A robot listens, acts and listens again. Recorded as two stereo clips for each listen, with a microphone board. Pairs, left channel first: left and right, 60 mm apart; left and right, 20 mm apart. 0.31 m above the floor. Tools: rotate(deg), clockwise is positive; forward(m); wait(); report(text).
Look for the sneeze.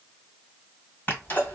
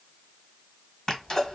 rotate(-35)
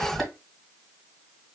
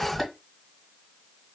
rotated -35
report("Found it: a sneeze, straight ahead, 1 to 2 m away.")